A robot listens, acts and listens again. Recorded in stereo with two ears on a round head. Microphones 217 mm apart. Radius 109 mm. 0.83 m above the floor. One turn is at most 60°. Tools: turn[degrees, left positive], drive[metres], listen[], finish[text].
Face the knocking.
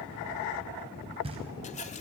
Thought: The knocking: about 25° right or 155° right.
Action: turn[-25]
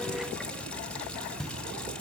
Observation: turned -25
Action: finish[Facing the knocking.]